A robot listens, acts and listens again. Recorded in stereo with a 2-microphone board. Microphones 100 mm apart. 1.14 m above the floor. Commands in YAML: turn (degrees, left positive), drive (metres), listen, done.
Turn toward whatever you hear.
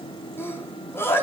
turn: 25
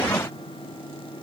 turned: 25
listen: true
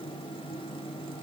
done: "I heard a sneeze, but can't make it out now. It was about straight ahead or 130° left."